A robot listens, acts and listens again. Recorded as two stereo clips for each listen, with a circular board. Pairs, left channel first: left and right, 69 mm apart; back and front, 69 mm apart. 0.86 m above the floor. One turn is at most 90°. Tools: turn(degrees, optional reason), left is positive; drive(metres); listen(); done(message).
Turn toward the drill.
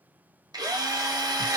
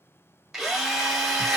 turn(degrees=-90, reason="The drill: 90° right.")
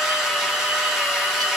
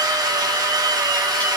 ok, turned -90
done("Found it: a drill, straight ahead, 1 to 2 m away.")